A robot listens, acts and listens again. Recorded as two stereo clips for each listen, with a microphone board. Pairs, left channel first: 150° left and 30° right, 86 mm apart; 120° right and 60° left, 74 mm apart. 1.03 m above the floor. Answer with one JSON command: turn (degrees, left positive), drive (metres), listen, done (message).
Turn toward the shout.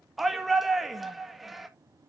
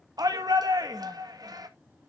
{"turn": 55}
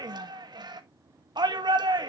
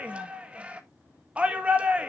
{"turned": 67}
{"turn": -10}
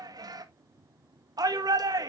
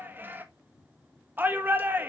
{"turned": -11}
{"done": "Found it: a shout, straight ahead, 1 to 2 m away."}